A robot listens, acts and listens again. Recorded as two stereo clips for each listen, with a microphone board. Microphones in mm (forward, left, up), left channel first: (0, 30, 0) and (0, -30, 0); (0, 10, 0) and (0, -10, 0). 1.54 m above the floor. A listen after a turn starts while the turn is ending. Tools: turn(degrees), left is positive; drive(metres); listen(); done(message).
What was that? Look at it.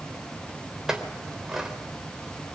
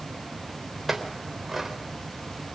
turn(degrees=-30)
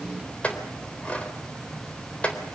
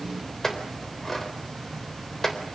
turn(degrees=20)
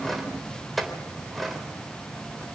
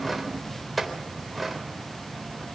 done("Facing the clink, 2 to 4 m away.")